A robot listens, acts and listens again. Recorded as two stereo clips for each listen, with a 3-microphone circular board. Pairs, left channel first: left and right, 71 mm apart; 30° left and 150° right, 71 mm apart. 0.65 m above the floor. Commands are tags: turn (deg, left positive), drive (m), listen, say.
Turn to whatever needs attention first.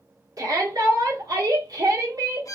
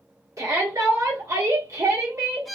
<turn deg="-115"/>
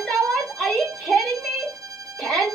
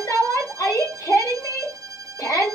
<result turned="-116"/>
<say>Found it: a shout, straight ahead.</say>